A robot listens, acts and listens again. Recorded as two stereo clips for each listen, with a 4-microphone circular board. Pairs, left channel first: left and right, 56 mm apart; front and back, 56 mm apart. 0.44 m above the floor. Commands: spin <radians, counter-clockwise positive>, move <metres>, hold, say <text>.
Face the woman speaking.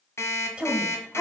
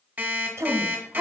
spin -2.88
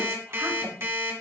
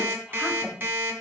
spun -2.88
hold
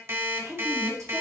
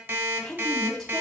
spin -1.48
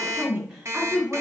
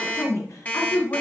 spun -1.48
spin -0.35
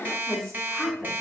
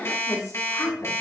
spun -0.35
say Facing the woman speaking, 2 to 4 m away.